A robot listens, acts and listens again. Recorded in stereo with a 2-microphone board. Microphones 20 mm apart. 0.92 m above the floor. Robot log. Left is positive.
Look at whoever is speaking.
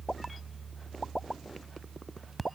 cmd idle
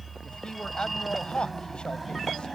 note: The man speaking: about 55° left or 125° left.
cmd yaw +55
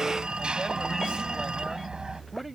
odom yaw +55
end: Facing the man speaking.